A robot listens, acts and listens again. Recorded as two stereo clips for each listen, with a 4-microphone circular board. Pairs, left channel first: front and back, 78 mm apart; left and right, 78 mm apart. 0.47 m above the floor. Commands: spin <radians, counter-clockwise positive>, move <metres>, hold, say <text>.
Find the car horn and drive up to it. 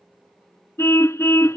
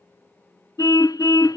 spin 0.96
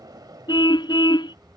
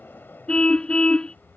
spin 0.26
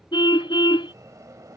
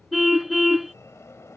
move 1.0
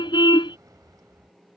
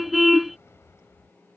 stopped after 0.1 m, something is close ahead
say Blocked. The car horn is further on, straight ahead.